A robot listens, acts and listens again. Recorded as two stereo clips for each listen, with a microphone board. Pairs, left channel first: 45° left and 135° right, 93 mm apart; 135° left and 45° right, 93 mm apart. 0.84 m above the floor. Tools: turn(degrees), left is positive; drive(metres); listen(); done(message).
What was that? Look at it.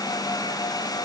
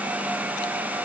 listen()
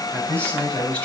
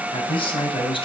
turn(degrees=120)
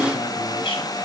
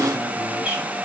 turn(degrees=35)
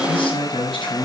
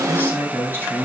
turn(degrees=25)
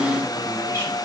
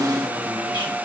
listen()
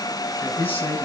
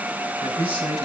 turn(degrees=-20)
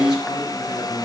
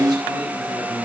listen()
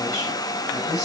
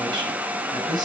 done("Facing the man speaking, over 4 m away.")